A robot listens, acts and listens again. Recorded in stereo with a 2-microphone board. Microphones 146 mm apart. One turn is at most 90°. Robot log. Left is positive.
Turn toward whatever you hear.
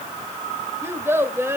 note: The child speaking: about 15° right or 165° right.
cmd yaw -15
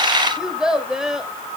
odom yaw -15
end: Facing the child speaking.